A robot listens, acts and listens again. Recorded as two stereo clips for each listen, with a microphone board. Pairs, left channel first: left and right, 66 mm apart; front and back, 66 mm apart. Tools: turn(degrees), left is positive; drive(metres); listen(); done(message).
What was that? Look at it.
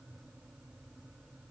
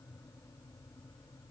listen()
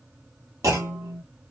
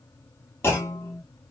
turn(degrees=-55)
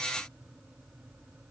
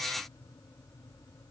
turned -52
done("Facing where the clunk came from. I can't hear it now.")